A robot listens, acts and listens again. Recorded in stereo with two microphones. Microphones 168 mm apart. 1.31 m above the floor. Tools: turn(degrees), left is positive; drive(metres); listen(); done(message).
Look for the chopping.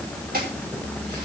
turn(degrees=-60)
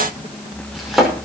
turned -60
done("Facing the chopping, over 4 m away.")